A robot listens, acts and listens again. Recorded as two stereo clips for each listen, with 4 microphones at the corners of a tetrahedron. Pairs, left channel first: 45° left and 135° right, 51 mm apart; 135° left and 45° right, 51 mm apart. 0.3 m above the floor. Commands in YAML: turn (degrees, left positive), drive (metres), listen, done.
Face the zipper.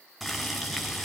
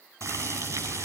listen: true
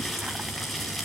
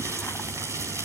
listen: true
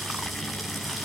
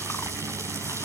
done: "I can't make out a zipper, only boiling."